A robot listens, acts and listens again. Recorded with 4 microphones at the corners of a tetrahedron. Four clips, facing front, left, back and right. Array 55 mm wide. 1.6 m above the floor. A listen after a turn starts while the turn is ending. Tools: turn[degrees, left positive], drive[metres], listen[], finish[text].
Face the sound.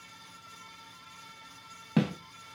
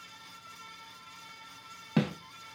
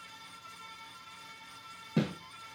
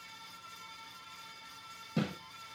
Thought: The snare drum: 45° left.
Action: turn[45]
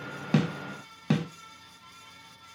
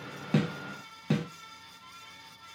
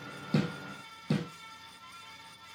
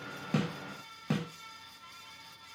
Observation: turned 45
Action: finish[Found it: a snare drum, straight ahead.]